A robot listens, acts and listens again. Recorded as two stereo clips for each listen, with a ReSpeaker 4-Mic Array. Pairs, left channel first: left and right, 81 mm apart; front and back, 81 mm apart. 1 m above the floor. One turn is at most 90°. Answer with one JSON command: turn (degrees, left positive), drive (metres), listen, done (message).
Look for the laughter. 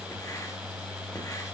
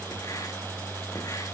{"listen": true}
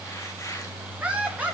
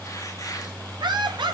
{"turn": -90}
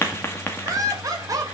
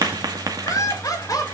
{"turn": -45}
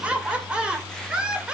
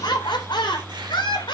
{"turn": -10}
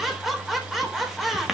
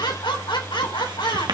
{"done": "Facing the laughter."}